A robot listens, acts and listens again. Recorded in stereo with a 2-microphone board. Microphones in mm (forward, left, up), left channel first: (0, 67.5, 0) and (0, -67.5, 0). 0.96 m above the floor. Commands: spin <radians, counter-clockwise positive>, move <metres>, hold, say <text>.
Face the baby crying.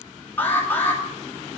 hold
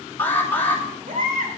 spin -1.31
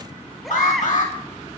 say Found it: a baby crying, straight ahead, 2 to 4 m away.